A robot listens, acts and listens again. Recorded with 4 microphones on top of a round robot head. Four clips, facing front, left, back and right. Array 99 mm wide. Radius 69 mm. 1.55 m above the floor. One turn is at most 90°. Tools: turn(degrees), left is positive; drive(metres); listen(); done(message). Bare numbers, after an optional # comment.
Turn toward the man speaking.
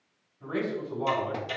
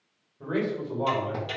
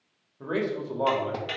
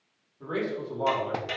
# The man speaking: 175° left.
turn(90)
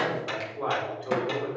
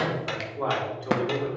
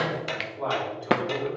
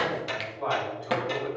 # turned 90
# The man speaking is now 85° left.
turn(85)
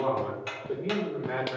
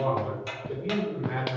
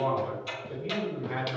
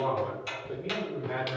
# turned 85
done("Found it: a man speaking, straight ahead, over 4 m away.")